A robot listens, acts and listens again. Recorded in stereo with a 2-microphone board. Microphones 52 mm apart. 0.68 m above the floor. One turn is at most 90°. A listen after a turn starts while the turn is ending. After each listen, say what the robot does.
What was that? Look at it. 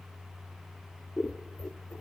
Turn 60° left.
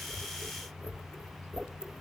Turn 10° left.
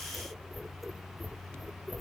Facing the scissors.